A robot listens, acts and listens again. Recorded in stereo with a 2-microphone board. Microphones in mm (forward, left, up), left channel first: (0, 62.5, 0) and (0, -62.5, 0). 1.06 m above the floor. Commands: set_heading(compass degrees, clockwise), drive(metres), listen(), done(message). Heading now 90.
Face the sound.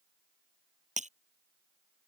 set_heading(160)
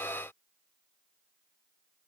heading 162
listen()
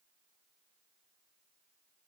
done("I heard breaking glass, but can't make it out now. It was about straight ahead or 35° right.")